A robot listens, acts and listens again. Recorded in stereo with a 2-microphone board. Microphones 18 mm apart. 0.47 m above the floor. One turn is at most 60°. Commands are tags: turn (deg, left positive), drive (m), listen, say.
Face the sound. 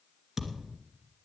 <turn deg="-30"/>
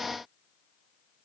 <listen/>
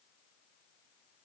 <say>I heard a thud, but can't make it out now. It was about 25° left or 145° right.</say>